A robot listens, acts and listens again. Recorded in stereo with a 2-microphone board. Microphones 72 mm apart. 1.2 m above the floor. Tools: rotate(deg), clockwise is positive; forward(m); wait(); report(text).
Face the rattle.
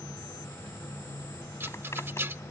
rotate(30)
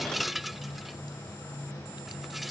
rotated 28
report("Facing the rattle.")